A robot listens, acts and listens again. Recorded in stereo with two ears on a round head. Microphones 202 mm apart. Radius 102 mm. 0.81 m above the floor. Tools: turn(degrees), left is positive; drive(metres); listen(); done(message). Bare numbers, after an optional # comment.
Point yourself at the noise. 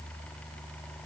listen()
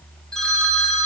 turn(30)
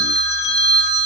# So it is at 150° left.
turn(150)
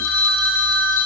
# The phone ringing is now 60° left.
turn(60)
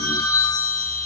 # The phone ringing is now 15° left.
turn(15)
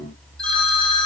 done("Facing the phone ringing, 2 to 4 m away.")